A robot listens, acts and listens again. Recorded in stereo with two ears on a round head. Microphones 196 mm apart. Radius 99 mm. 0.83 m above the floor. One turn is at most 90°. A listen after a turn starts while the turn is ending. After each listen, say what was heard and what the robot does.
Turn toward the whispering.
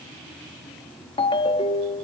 Keep listening.
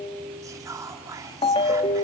Turn 30° right.
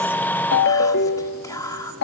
So it is at 15° left. Turn 15° left.
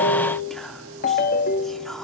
Keep listening.
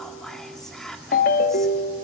Found it: whispering, straight ahead, 1 to 2 m away.